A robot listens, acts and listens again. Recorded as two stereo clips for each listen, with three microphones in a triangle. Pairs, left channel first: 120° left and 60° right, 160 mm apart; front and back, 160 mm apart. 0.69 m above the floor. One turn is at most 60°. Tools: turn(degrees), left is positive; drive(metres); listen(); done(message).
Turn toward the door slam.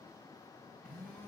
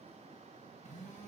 listen()
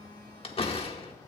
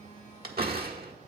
turn(degrees=60)
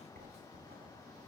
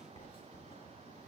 turn(degrees=60)
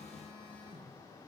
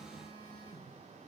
turn(degrees=55)
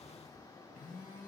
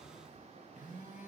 done("Facing where the door slam came from. I can't hear it now.")